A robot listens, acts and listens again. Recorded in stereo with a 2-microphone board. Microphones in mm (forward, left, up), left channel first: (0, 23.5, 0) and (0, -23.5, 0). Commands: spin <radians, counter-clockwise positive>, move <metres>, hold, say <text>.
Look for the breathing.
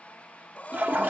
spin 0.52
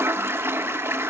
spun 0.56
hold
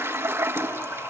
hold
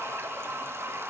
say I heard breathing, but can't make it out now. It was about straight ahead or 115° left.